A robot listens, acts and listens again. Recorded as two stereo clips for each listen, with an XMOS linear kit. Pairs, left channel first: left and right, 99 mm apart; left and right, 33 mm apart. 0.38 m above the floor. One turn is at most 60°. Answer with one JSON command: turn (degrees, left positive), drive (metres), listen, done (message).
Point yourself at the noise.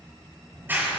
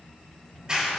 {"turn": -20}
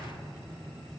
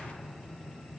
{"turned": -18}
{"done": "Found it: a clap, straight ahead, over 4 m away."}